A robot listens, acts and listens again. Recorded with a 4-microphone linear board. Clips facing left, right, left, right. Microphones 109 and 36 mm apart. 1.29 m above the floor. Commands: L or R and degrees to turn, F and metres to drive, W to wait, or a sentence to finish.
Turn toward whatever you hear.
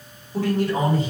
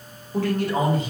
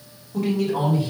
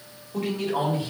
R55
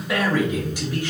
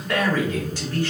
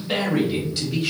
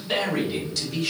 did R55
L15
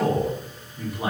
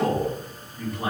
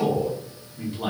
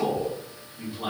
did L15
L10
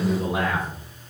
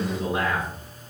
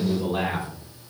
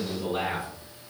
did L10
L10
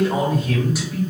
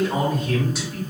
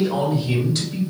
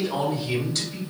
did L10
Facing the man speaking.